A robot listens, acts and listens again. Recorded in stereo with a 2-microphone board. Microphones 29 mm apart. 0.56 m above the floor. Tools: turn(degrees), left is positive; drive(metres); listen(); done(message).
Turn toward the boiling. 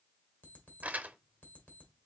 listen()
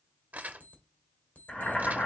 turn(degrees=50)
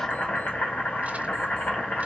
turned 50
turn(degrees=75)
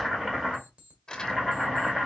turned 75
turn(degrees=-10)
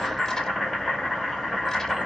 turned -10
done("Facing the boiling.")